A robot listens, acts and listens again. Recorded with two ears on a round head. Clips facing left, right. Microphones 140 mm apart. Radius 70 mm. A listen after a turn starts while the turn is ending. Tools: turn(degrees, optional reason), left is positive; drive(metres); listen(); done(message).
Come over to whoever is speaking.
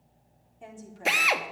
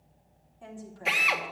turn(degrees=25, reason="The woman speaking: about 25° left or 155° left.")
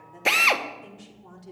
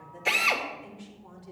turn(degrees=130, reason="So it is at 130° left.")
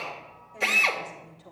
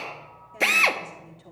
turn(degrees=-35, reason="The woman speaking is now 35° right.")
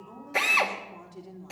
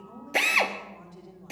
turn(degrees=15, reason="The woman speaking is now 15° left.")
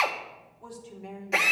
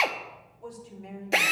drive(metres=1.0)
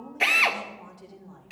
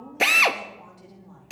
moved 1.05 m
drive(metres=1.0)
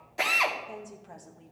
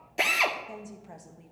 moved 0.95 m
drive(metres=1.0)
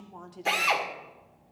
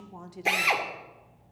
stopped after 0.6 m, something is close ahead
turn(degrees=-10, reason="The woman speaking is now 10° right.")
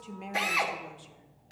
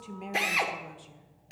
done("I am next to the woman speaking.")